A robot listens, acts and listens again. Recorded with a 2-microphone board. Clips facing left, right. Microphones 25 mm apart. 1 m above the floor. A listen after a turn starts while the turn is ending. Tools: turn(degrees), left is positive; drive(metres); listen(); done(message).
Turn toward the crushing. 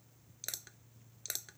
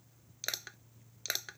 turn(degrees=-40)
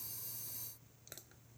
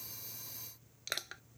turn(degrees=-100)
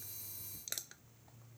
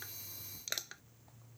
turn(degrees=-30)
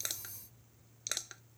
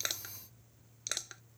done("Found it: crushing, straight ahead.")